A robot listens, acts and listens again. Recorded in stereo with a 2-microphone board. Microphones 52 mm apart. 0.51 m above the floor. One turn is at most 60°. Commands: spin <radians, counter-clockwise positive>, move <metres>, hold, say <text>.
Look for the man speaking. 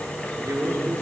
spin -0.79
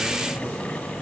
hold
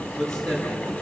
spin 0.17
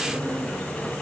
say Found it: a man speaking, straight ahead.